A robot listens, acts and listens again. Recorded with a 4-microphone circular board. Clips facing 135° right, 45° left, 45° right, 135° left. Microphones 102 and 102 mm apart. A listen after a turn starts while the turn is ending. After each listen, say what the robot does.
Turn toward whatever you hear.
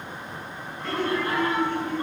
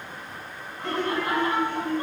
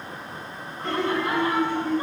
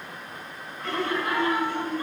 Turn 25° left.
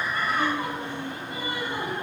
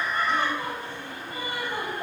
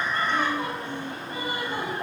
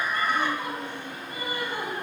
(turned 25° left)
Facing the laughter.